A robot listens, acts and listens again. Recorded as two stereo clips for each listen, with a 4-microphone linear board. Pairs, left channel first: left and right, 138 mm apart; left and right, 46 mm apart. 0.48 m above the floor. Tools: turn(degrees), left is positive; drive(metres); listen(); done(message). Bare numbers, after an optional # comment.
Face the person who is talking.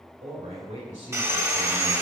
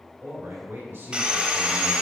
# The man speaking: about 55° right or 125° right.
turn(-55)
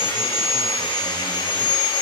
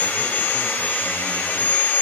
listen()
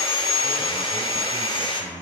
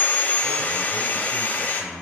# So it is at 25° right.
turn(-25)
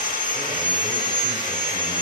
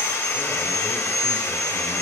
listen()
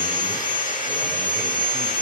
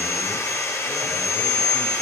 listen()
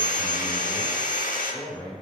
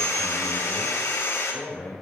# The man speaking is now 10° left.
turn(10)
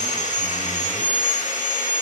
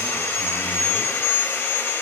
listen()
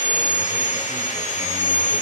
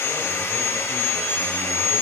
listen()
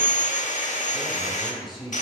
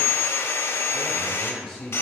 done("Facing the man speaking.")